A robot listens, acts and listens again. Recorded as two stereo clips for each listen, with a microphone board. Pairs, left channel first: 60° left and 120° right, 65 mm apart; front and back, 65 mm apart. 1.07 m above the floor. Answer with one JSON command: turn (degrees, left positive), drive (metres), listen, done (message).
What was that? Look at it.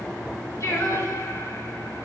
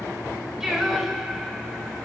{"turn": 95}
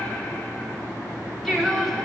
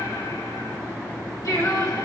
{"turn": -30}
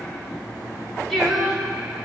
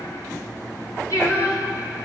{"turn": -30}
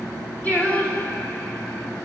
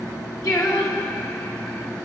{"done": "Facing the singing, 2 to 4 m away."}